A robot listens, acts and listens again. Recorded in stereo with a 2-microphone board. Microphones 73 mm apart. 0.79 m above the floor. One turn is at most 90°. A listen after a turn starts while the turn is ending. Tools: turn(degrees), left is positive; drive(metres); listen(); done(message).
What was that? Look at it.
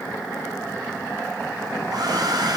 turn(degrees=-60)
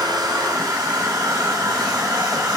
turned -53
turn(degrees=-60)
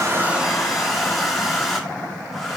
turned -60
done("Found it: a hair dryer, straight ahead.")